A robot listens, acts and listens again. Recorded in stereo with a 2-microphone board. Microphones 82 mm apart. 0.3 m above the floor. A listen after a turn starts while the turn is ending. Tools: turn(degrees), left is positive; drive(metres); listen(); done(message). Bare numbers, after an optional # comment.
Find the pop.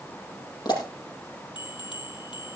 # The pop: about 55° left or 125° left.
turn(55)
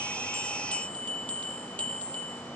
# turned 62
listen()
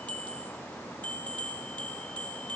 done("I heard a pop, but can't make it out now. It was about 5° right or 60° left.")